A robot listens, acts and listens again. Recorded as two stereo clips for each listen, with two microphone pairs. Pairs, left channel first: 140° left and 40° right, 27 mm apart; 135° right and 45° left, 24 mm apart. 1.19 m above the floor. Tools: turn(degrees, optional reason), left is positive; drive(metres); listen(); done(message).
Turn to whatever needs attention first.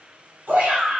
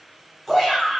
turn(degrees=-50, reason="The shout: 50° right.")
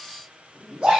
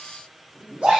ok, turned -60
turn(degrees=10, reason="The shout is now 10° left.")
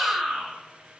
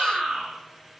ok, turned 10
done("Facing the shout, 1 to 2 m away.")